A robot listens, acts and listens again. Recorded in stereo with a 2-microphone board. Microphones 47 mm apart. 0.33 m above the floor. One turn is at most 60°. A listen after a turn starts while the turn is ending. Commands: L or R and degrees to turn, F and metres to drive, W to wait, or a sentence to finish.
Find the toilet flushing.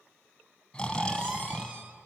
W
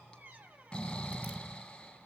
W
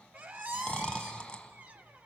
I can't make out a toilet flushing, only snoring and a squeak.